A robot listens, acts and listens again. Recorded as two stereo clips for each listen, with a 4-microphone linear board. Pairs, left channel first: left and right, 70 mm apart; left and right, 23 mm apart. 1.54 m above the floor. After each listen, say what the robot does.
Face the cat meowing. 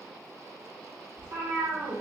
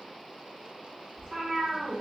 Turn 60° right.
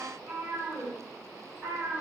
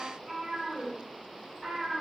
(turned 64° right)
Turn 25° right.
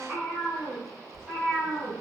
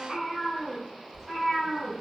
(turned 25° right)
Facing the cat meowing, 2 to 4 m away.